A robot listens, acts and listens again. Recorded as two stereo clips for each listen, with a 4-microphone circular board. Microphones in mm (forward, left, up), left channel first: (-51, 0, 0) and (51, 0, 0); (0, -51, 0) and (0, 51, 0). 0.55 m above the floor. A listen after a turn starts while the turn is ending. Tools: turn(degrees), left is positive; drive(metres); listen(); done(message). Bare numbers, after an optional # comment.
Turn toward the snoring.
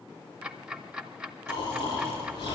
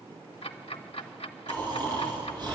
# The snoring: 135° left.
turn(135)
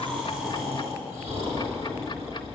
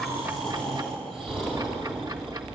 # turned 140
done("Facing the snoring.")